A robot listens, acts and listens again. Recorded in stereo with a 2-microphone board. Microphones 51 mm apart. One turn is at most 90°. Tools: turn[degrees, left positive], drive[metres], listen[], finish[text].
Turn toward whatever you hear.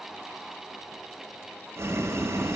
Thought: The boiling: about 70° right or 110° right.
Action: turn[-70]
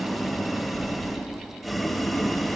Action: finish[Facing the boiling.]